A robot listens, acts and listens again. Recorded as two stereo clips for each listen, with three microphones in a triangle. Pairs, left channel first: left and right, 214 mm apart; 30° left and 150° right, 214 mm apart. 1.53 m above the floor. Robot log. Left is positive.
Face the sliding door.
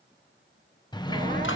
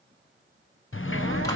note: The sliding door: 20° left.
cmd yaw +20
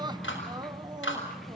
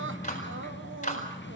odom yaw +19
end: Facing the sliding door.